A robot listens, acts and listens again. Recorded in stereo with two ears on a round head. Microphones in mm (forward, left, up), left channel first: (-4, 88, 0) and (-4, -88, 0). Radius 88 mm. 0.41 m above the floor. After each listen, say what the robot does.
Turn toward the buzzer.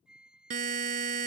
Turn 40° right.
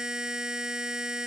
Found it: a buzzer, straight ahead.